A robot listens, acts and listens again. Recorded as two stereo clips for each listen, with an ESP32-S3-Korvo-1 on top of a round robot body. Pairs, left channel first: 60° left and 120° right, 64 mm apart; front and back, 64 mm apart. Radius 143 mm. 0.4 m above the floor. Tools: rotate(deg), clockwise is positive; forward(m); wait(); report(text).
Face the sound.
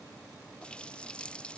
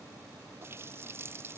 rotate(-135)
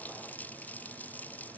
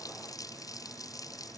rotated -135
report("Found it: a running tap, straight ahead.")